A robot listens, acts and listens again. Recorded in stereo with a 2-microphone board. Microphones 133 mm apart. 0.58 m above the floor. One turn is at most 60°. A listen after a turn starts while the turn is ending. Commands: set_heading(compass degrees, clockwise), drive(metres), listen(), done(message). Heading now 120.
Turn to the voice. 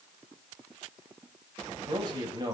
set_heading(150)
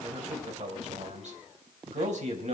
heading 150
set_heading(210)
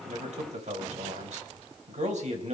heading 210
set_heading(270)
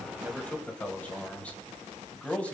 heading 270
set_heading(260)
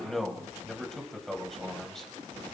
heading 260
done("Found it: a man speaking, straight ahead, 2 to 4 m away.")